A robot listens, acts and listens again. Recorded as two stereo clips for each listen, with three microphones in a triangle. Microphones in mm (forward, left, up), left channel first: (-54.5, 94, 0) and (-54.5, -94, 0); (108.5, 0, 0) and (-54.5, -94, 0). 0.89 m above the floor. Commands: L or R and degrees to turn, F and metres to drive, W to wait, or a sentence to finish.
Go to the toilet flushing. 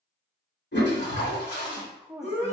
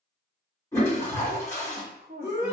L105
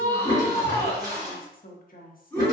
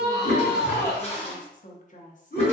R20
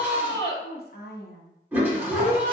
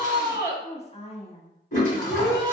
R10
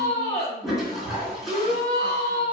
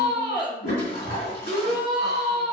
F1.0
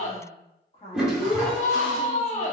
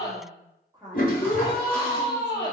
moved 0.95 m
F1.0
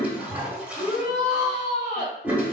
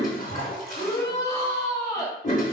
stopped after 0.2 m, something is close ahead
R10
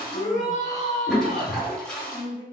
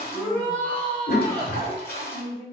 Arrived at the toilet flushing, straight ahead.